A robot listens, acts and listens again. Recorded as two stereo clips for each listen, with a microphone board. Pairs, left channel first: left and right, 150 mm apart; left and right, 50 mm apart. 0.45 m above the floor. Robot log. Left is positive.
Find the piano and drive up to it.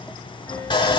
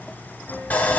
note: The piano: about 15° left or 165° left.
cmd yaw +15
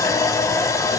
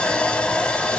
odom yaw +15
cmd idle
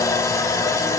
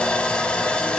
cmd idle
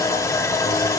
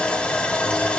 end: I heard a piano, but can't make it out now. It was about straight ahead or 150° left. I did not reach it.